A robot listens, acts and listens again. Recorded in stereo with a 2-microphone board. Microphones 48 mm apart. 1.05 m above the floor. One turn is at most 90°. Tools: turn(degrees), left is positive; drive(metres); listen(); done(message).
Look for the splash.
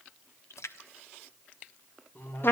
turn(degrees=90)
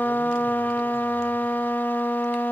done("I heard a splash from this way, but can't make it out now.")